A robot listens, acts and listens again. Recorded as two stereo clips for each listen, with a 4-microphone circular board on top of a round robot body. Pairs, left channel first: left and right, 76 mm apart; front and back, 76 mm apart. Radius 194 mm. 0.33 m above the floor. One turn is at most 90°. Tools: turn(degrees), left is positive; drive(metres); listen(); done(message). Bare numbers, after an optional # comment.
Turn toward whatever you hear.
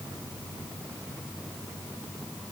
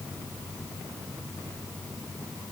listen()
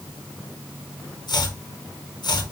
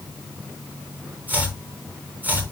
# The chopping: 110° left.
turn(90)
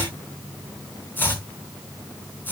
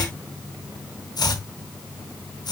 # The chopping is now 25° left.
turn(25)
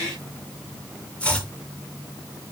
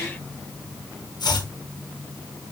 # The chopping is now 15° left.
turn(15)
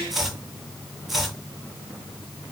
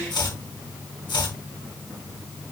done("Facing the chopping.")